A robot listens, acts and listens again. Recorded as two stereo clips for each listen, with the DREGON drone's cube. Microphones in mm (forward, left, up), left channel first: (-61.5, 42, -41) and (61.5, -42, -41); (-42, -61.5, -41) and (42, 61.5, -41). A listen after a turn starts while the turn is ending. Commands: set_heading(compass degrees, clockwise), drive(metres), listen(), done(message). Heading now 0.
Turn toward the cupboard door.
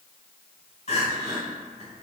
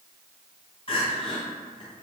listen()
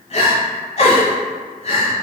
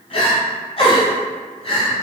listen()
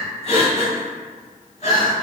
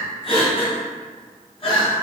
done("I can't make out a cupboard door to turn to.")